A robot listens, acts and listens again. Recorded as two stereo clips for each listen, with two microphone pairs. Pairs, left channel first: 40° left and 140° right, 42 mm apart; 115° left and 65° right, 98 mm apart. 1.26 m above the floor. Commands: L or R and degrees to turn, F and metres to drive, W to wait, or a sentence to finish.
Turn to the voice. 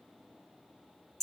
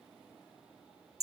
W
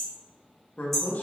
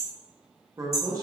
R10
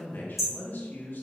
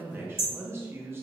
Facing the man speaking.